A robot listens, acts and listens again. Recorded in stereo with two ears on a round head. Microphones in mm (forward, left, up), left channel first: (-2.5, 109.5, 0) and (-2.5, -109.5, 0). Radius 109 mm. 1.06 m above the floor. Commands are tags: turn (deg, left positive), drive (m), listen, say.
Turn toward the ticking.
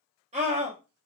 <listen/>
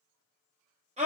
<listen/>
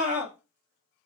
<say>I can't make out ticking, only a scream.</say>